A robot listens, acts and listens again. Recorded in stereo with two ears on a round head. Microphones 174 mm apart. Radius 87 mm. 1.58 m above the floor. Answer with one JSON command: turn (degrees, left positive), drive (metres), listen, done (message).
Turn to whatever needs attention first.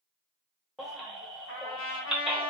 {"turn": 30}
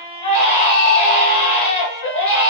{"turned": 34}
{"turn": 150}
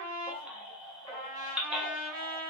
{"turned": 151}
{"done": "Found it: a baby crying, straight ahead."}